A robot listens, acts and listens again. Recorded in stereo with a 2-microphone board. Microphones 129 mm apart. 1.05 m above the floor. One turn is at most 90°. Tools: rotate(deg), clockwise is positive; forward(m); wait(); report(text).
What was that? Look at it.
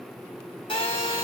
rotate(-40)
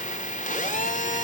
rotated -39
rotate(-90)
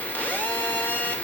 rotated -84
rotate(-15)
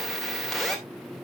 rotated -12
report("Found it: a phone buzzing, straight ahead.")